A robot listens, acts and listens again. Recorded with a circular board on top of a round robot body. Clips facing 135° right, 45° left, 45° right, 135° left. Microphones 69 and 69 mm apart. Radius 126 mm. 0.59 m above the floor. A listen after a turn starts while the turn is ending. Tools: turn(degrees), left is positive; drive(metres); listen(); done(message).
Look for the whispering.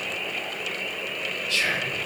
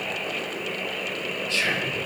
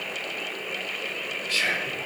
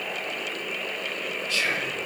turn(degrees=-10)
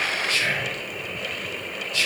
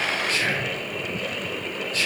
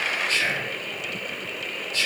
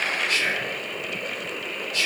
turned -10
done("Found it: whispering, straight ahead.")